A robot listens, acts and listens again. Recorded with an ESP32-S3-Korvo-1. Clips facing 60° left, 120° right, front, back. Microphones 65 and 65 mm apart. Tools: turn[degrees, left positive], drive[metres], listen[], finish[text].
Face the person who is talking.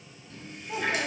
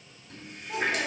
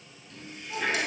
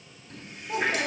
Thought: The child speaking: 140° left.
Action: turn[140]
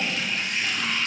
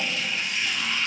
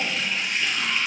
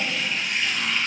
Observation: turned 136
Action: listen[]
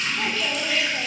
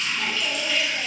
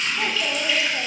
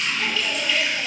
Action: listen[]
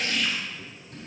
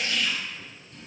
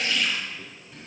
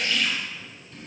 Action: finish[Facing where the child speaking came from. I can't hear it now.]